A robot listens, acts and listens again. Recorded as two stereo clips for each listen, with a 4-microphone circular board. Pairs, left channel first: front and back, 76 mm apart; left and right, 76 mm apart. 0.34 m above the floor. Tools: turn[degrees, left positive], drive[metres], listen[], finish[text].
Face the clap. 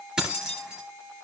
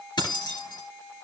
Action: listen[]
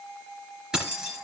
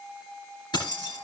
Action: listen[]
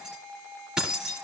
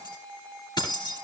Action: finish[I can't make out a clap to turn to.]